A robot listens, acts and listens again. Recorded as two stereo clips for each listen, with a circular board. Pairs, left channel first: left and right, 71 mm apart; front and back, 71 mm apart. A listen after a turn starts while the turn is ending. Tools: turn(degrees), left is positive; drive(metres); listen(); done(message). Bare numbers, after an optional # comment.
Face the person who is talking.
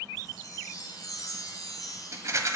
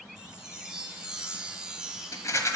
listen()
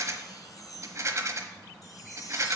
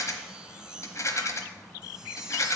listen()
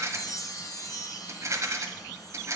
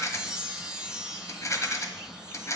done("I can't make out anyone speaking, only a rattle and a chime.")